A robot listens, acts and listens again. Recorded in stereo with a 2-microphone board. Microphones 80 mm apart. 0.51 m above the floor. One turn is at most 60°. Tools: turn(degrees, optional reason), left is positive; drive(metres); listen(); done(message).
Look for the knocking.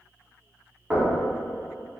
turn(degrees=-20, reason="The knocking: about 20° right or 160° right.")
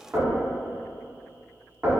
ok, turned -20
turn(degrees=-60, reason="So it is at 135° right.")
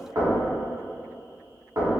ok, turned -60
turn(degrees=-60, reason="The knocking is now 85° right.")
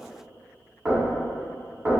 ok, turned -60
turn(degrees=-20, reason="The knocking is now 20° right.")
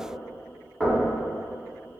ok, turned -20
done("Facing the knocking.")